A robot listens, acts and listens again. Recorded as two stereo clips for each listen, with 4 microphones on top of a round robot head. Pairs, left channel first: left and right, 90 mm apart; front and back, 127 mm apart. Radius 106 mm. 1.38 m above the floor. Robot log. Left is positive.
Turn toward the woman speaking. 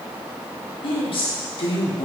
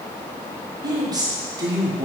note: The woman speaking: 120° left.
cmd yaw +120
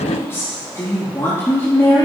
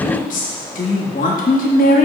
note: The woman speaking is now 20° left.
cmd yaw +20
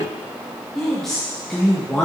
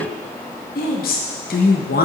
end: Facing the woman speaking.